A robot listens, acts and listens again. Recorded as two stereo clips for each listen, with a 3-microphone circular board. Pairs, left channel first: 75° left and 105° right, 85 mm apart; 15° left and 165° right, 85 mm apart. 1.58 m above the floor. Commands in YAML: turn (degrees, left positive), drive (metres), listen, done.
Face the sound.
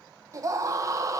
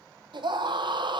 turn: -150
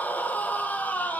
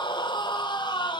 done: "Facing the scream, 1 to 2 m away."